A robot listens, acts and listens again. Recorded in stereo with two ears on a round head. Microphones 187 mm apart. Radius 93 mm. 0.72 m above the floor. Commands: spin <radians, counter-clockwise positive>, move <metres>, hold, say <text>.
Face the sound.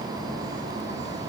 hold
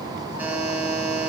spin -0.52
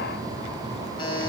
spin 0.44
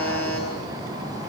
spin 0.17
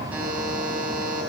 say Facing the buzzer, over 4 m away.